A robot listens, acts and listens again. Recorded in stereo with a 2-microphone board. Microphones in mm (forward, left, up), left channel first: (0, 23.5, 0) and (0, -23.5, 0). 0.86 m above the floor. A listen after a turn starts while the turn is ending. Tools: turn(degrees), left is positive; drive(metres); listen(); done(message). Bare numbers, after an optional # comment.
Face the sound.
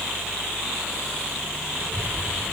# The child speaking: about 45° right or 135° right.
turn(-45)
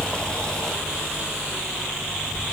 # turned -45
done("Found it: a child speaking, straight ahead, 1 to 2 m away.")